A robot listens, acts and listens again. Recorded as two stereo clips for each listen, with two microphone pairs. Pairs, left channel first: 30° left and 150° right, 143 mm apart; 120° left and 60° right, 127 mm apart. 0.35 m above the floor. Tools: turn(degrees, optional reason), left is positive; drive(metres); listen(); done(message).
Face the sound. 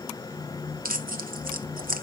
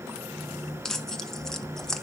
turn(degrees=-155, reason="The tearing paper: 155° right.")
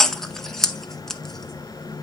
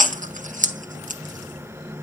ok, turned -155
turn(degrees=-55, reason="The tearing paper is now 55° right.")
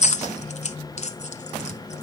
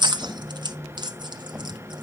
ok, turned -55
done("Found it: tearing paper, straight ahead.")